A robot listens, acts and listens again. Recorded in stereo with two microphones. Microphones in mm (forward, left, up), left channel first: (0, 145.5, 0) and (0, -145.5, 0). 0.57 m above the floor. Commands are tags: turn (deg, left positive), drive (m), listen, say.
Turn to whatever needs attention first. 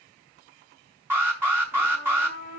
<turn deg="-30"/>
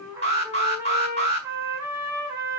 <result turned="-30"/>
<turn deg="20"/>
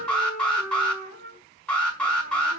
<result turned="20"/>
<say>Facing the alarm, over 4 m away.</say>